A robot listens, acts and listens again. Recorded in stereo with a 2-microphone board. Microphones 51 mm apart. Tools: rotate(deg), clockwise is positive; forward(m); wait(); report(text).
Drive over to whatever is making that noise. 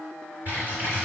rotate(45)
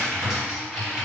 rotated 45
rotate(15)
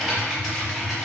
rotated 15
forward(1.0)
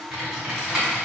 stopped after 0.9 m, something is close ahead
rotate(10)
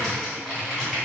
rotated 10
report("I am next to the typing on a keyboard.")